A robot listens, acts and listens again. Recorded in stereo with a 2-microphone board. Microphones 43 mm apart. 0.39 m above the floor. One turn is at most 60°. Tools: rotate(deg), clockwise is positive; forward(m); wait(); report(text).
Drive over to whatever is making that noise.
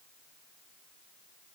wait()
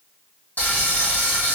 rotate(-50)
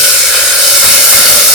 forward(1.0)
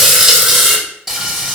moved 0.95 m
forward(1.0)
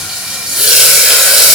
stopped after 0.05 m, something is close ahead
rotate(10)
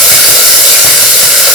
report("Arrived at the frying, straight ahead.")